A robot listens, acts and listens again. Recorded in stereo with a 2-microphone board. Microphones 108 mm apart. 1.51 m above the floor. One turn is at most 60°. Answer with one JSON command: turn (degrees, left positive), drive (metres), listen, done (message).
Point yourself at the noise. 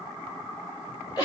{"turn": 35}
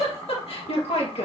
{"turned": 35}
{"turn": 60}
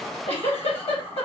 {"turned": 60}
{"turn": 60}
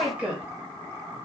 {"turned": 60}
{"turn": -10}
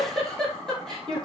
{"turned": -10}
{"done": "Facing the giggle."}